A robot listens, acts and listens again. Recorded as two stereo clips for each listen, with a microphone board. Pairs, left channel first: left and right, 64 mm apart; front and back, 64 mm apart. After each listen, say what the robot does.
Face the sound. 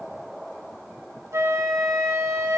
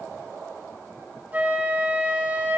Turn 120° right.
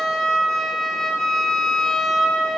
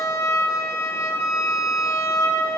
Found it: a flute, straight ahead.